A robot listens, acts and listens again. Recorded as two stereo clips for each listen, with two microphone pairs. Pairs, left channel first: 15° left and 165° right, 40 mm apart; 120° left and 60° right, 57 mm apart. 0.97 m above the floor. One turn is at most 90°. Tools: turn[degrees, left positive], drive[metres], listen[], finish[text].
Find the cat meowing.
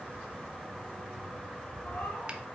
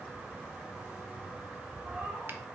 Action: listen[]
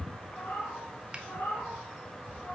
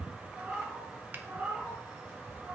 Action: finish[Facing the cat meowing, 2 to 4 m away.]